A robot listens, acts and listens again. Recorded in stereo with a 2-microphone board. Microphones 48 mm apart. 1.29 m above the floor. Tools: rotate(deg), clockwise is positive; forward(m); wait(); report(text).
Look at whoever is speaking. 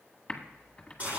wait()
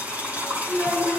rotate(70)
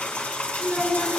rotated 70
rotate(40)
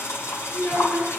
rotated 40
report("Facing the child speaking.")